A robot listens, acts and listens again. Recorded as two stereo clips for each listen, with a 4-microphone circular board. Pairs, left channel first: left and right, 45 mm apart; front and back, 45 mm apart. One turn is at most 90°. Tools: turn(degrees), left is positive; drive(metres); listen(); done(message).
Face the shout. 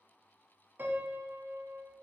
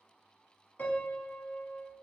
listen()
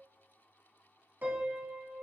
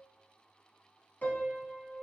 listen()
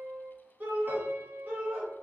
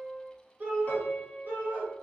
turn(degrees=-90)
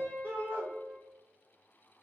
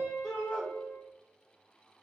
turn(degrees=-70)
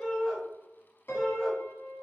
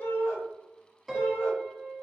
done("Facing the shout.")